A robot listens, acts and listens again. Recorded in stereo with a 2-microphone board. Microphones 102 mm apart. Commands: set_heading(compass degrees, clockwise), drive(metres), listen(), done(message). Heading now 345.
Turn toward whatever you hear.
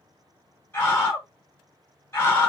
set_heading(320)
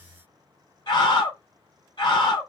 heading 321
set_heading(191)
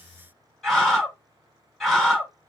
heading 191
done("Facing the scream.")